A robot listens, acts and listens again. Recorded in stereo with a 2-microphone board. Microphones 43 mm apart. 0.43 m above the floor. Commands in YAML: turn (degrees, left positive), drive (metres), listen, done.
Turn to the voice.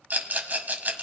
listen: true
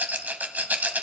listen: true
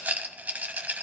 done: "I can't make out anyone speaking, only a rattle."